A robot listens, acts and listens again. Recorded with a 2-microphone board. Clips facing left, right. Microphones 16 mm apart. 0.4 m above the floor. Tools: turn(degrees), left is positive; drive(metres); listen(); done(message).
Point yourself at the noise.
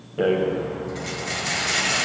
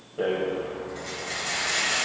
turn(degrees=35)
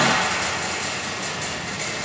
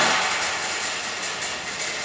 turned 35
done("Facing the rattle, 1 to 2 m away.")